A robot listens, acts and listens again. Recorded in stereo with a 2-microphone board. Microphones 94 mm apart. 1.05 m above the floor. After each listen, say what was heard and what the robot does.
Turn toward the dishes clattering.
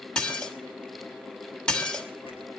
Turn 30° left.
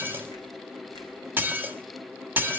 So it is at 20° right. Turn 20° right.
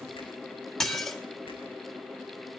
Found it: dishes clattering, straight ahead.